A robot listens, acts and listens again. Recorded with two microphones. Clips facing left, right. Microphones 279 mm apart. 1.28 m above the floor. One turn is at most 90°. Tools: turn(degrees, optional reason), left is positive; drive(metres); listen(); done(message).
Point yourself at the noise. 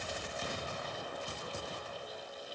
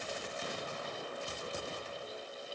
listen()
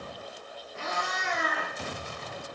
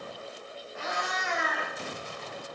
turn(degrees=40, reason="The cat meowing: about 40° left or 140° left.")
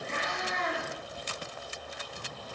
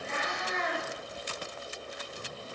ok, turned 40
turn(degrees=40, reason="The cat meowing: about 40° left or 140° left.")
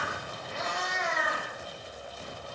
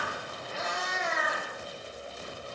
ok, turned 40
done("Found it: a cat meowing, straight ahead.")